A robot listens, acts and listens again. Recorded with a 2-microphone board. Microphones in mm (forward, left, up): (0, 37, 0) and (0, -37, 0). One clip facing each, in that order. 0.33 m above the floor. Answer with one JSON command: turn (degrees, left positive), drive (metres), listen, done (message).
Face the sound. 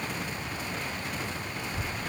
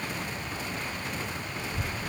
{"turn": -90}
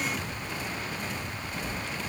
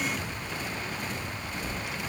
{"turn": -15}
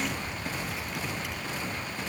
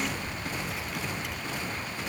{"done": "Found it: a child speaking, straight ahead."}